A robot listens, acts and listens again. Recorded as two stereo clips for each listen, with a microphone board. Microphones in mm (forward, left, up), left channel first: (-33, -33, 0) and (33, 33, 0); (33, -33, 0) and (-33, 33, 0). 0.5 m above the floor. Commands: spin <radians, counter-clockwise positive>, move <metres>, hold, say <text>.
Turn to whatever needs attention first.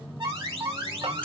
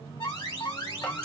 say Facing the alarm.